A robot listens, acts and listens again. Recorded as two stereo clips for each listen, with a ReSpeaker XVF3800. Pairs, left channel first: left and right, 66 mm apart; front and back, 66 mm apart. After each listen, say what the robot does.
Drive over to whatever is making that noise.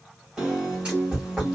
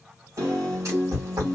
Turn 165° right.
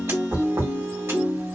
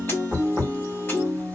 Turn 50° right.
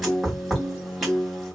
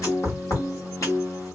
Drive 1.0 m forward.
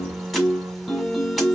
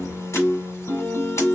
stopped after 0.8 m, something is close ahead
Arrived at the piano, straight ahead.